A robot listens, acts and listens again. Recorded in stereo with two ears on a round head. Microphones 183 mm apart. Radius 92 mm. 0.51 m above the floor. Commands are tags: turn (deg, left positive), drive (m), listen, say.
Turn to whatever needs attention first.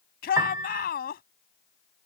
<turn deg="45"/>
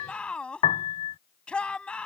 <say>Facing the shout.</say>